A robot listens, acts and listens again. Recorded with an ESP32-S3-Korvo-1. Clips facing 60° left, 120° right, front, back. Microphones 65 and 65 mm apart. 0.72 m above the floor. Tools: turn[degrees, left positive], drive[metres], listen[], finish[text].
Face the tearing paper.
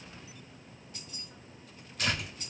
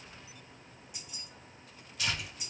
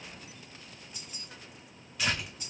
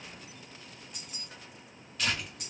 Thought: The tearing paper: 85° left.
Action: turn[85]
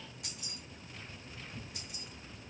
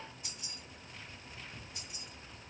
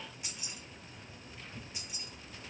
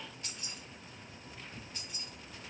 Action: finish[Found it: tearing paper, straight ahead, 1 to 2 m away.]